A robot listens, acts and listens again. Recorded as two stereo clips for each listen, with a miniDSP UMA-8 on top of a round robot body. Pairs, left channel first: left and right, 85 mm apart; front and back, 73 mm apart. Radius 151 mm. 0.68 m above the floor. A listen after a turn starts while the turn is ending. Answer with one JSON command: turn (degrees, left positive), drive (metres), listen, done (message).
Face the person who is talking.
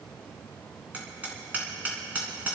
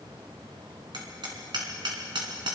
{"listen": true}
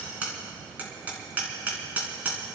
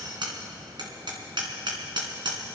{"listen": true}
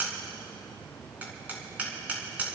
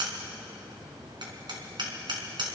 {"done": "I can't make out anyone speaking to turn to."}